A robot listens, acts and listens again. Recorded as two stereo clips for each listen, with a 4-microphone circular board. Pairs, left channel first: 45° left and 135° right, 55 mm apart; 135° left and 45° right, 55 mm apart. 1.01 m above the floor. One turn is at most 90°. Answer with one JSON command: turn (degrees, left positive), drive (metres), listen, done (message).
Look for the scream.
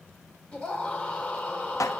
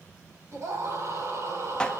{"turn": -20}
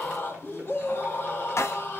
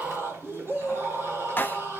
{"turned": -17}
{"done": "Facing the scream."}